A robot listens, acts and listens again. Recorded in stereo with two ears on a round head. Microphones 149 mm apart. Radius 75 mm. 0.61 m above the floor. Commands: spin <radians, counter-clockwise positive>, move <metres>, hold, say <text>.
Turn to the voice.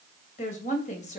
spin 0.79
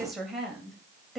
say Facing the woman speaking, 2 to 4 m away.